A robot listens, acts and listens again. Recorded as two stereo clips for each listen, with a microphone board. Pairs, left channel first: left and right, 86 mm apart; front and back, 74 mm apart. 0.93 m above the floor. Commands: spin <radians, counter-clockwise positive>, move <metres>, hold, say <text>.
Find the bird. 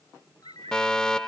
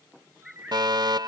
spin -1.66
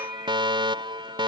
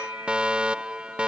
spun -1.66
hold
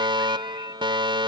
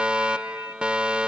hold
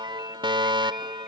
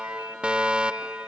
say Facing where the bird came from. I can't hear it now.